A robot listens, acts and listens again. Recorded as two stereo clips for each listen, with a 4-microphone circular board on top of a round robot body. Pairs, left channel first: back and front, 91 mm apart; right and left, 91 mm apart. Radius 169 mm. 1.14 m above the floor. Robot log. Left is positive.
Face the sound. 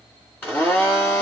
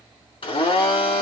note: The blender: 110° right.
cmd yaw -110
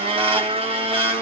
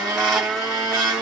end: Facing the blender, 1 to 2 m away.